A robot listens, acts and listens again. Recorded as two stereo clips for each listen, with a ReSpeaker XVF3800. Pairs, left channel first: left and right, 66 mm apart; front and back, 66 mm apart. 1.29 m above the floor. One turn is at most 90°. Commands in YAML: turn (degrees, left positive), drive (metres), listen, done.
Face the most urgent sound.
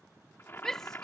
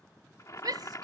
turn: 90
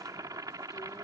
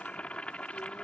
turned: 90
turn: 85
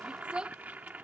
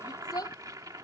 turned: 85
turn: -15
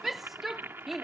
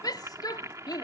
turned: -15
done: "Found it: a shout, straight ahead."